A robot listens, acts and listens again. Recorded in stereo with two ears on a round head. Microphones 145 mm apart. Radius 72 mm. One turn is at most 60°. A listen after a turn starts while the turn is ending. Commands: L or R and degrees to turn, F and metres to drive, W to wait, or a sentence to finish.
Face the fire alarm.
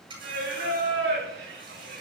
W
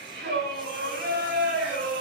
W
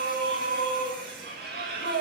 I can't make out a fire alarm, only a running tap and singing.